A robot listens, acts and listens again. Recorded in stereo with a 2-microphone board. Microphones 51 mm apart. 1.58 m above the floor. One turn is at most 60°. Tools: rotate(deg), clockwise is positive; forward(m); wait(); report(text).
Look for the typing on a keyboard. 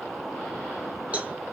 wait()
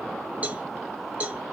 wait()
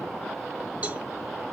report("I can't make out typing on a keyboard to turn to.")